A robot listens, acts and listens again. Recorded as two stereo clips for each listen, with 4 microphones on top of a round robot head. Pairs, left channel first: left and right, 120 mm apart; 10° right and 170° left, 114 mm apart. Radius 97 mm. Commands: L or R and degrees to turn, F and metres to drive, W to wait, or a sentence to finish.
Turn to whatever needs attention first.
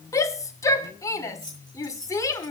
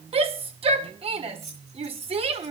L150
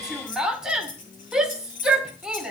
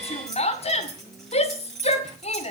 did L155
Facing the shout, 2 to 4 m away.